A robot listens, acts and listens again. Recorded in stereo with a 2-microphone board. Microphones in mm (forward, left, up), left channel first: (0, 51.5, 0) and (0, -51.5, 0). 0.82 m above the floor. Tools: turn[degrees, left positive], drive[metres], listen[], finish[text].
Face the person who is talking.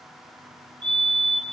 Action: listen[]
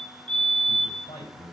Thought: The man speaking: about 70° left or 110° left.
Action: turn[70]
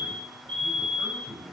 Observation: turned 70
Action: finish[Facing the man speaking, over 4 m away.]